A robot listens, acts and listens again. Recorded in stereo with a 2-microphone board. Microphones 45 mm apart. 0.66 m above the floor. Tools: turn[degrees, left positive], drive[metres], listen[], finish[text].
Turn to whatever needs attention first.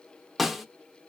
Action: listen[]
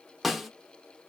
Action: listen[]
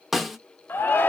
Thought: The shout: about 50° left or 130° left.
Action: turn[50]
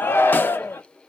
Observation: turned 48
Thought: So it is at 65° left.
Action: turn[65]
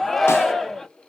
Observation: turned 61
Action: finish[Facing the shout, under 1 m away.]